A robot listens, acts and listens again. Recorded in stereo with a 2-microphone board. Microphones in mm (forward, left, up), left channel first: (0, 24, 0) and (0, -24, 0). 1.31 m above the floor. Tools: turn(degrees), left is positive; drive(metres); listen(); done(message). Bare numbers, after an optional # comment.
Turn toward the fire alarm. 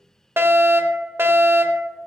# The fire alarm: about 60° right or 120° right.
turn(-60)
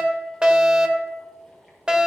# So it is at 30° right.
turn(-30)
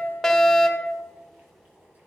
done("Found it: a fire alarm, straight ahead.")